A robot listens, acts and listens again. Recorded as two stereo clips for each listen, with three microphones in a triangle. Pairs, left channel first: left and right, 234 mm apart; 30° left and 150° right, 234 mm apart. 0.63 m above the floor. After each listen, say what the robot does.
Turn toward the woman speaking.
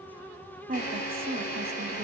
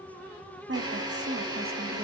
Turn 125° right.
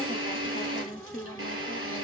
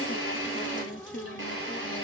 Turn 50° left.
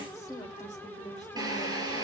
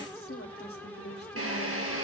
Turn 25° left.
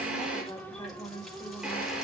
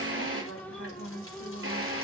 Turn 15° left.
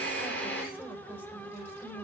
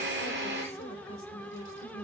Facing the woman speaking, 2 to 4 m away.